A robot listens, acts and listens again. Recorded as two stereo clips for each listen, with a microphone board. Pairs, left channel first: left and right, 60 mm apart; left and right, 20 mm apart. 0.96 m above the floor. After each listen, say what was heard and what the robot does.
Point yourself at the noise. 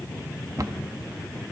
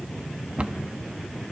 Turn 90° right.
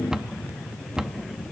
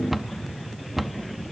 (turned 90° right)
So it is at 10° right. Turn 10° right.
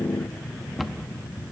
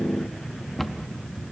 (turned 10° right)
Facing the cupboard door.